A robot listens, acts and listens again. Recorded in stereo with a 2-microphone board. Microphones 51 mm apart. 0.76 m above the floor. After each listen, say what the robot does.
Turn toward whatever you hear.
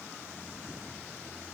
Keep listening.
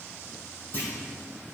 Turn 35° left.
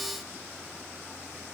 Keep listening.
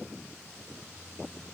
I heard a clunk, but can't make it out now. It was about straight ahead or 110° left.